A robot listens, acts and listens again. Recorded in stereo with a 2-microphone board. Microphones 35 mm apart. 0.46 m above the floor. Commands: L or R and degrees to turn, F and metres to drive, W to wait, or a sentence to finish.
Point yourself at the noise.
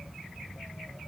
W
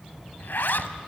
L90
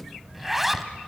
R10
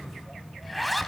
Facing the zipper, under 1 m away.